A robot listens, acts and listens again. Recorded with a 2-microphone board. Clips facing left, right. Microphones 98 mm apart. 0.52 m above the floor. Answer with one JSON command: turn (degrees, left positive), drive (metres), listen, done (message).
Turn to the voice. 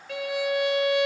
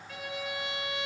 {"listen": true}
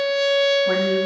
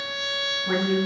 {"turn": 25}
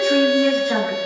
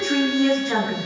{"done": "Found it: a woman speaking, straight ahead, over 4 m away."}